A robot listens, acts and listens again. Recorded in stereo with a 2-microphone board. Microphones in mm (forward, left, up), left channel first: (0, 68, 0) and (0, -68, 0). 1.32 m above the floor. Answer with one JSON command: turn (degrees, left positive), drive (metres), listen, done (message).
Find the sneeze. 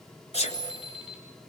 {"turn": 55}
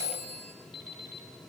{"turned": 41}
{"listen": true}
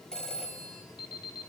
{"done": "I heard a sneeze, but can't make it out now. It was about 15° left or 85° left."}